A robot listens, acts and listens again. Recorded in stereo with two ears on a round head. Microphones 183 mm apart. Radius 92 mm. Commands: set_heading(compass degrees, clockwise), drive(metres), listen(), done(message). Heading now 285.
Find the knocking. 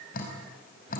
listen()
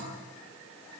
listen()
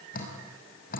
done("I can't make out knocking, only dripping.")